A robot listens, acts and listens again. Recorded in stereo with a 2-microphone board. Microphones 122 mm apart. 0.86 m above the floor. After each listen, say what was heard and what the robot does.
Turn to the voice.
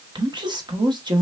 The woman speaking: about 40° right or 140° right. Turn 40° right.
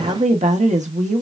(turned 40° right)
So it is at 100° right. Turn 100° right.
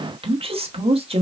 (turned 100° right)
The woman speaking is now 55° right. Turn 55° right.
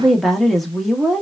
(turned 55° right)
Facing the woman speaking.